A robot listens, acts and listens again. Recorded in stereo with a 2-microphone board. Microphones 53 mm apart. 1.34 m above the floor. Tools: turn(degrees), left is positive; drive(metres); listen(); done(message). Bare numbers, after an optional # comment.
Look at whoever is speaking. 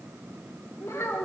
# The child speaking: about 75° left or 105° left.
turn(75)
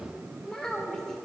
# So it is at 10° left.
turn(10)
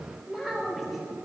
done("Found it: a child speaking, straight ahead, 2 to 4 m away.")